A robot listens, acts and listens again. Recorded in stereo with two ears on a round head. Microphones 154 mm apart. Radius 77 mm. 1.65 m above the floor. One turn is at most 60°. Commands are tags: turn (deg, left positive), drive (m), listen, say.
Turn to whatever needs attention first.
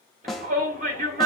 <turn deg="-55"/>
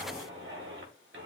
<turn deg="-60"/>
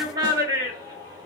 <turn deg="-25"/>
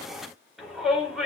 <say>Found it: a shout, straight ahead.</say>